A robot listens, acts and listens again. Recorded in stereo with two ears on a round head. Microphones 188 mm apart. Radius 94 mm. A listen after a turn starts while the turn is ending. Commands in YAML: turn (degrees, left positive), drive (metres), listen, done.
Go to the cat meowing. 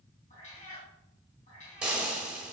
turn: 35
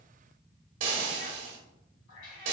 turn: 105
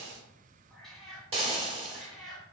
drive: 1.0
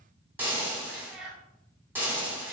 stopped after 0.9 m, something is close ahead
done: "Arrived at the cat meowing, straight ahead."